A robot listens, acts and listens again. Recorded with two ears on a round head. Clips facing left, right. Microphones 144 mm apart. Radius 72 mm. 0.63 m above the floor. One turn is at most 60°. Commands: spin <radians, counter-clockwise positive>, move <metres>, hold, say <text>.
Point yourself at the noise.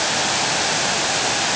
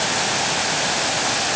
hold
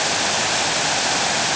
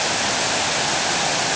hold
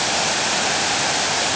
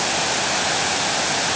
say I can't make out anything to turn to.